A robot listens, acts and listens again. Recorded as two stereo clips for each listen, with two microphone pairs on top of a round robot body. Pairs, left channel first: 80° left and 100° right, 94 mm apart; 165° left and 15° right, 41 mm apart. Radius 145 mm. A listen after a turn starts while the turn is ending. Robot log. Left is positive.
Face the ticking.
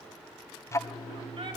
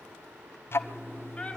note: The ticking: 140° left.
cmd yaw +140
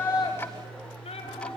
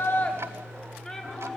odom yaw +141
end: Found it: ticking, straight ahead.